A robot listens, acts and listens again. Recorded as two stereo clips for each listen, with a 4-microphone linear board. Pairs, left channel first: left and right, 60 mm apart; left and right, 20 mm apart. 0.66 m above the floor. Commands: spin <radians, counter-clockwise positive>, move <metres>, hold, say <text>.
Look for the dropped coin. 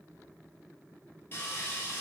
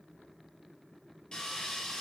hold
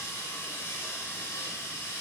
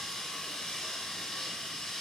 hold
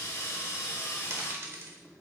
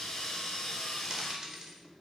spin -0.79
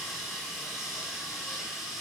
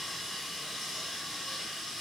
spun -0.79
hold
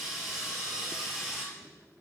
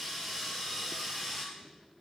say I heard a dropped coin, but can't make it out now. It was about straight ahead or 90° right.